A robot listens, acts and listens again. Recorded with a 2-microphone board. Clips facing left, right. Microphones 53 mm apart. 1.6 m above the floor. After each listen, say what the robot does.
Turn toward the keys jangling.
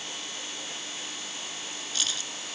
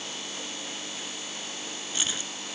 Turn 20° right.
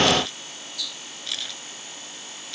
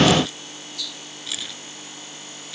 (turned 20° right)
Turn 30° right.
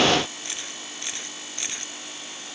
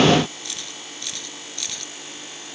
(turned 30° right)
Turn 25° left.
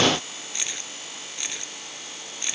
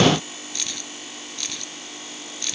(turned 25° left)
Turn 20° left.
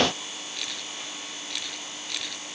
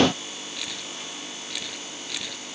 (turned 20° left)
Found it: keys jangling, straight ahead.